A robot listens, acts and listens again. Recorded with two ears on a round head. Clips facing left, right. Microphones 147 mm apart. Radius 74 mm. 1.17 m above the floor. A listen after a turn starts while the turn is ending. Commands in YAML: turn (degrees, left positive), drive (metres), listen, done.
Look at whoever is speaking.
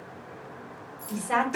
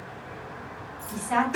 turn: 70
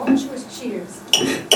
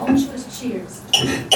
turn: 35
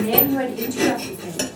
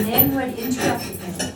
turn: 10
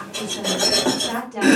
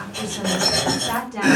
done: "Facing the woman speaking."